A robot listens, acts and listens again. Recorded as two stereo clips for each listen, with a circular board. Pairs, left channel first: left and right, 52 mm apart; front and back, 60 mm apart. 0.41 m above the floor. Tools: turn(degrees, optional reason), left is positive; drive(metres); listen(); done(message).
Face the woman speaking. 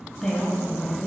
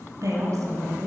turn(degrees=160, reason="The woman speaking: 160° left.")
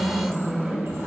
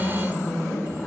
turn(degrees=-35, reason="The woman speaking is now 35° right.")
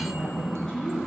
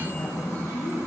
turn(degrees=10, reason="The woman speaking is now 10° left.")
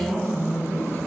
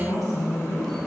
done("Found it: a woman speaking, straight ahead.")